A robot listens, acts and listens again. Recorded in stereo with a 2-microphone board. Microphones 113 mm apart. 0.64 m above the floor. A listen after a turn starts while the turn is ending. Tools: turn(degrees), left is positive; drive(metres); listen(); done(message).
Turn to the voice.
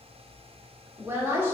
turn(degrees=-20)
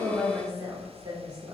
turn(degrees=-135)
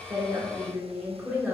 turn(degrees=-15)
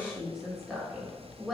done("Found it: a woman speaking, straight ahead.")